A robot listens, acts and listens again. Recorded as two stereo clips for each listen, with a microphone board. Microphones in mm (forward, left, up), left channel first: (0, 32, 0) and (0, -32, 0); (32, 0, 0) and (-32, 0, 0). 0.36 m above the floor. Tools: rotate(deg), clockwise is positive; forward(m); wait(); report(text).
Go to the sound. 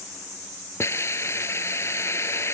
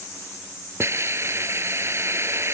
rotate(-135)
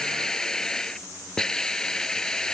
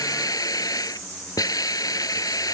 rotate(-10)
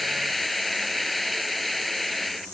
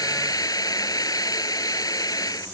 forward(1.0)
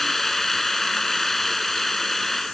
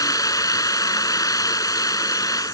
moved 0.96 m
forward(1.0)
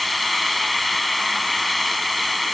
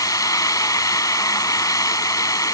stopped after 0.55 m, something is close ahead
report("Arrived at the hiss, straight ahead.")